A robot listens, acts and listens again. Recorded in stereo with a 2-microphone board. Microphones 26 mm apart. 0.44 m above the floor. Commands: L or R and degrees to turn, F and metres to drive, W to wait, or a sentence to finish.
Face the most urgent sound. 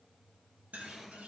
W
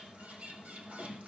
W
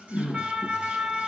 R45
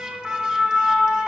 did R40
R85
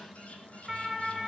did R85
Facing the siren, 2 to 4 m away.